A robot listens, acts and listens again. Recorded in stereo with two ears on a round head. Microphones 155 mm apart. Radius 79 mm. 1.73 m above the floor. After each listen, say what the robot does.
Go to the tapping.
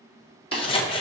Turn 60° right.
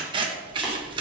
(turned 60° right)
Keep listening.
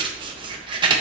Keep listening.
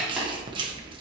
I heard tapping, but can't make it out now. It was about straight ahead or 60° right. I did not reach it.